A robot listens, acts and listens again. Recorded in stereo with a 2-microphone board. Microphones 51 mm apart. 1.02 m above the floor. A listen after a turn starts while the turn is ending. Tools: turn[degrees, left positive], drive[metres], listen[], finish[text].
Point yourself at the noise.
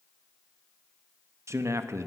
Thought: The man speaking: about 70° right or 110° right.
Action: turn[-70]
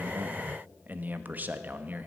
Thought: So it is at 35° right.
Action: turn[-35]
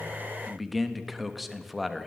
Action: finish[Facing the man speaking.]